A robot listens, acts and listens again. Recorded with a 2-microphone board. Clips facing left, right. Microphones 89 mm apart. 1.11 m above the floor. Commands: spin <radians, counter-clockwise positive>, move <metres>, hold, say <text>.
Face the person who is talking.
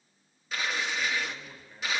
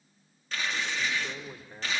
spin -1.57
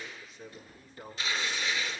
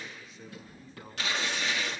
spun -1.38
say Found it: a man speaking, straight ahead, 2 to 4 m away.